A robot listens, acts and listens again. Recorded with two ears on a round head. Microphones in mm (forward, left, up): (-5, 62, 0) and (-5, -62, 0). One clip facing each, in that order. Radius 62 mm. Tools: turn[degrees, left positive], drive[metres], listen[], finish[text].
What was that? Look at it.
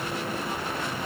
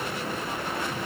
Action: listen[]
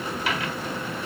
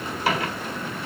Thought: The microwave: about 35° right or 145° right.
Action: turn[-35]
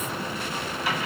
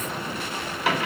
Thought: So it is at 105° right.
Action: turn[-105]
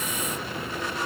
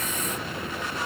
Action: listen[]
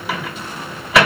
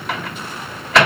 Action: finish[Facing the microwave.]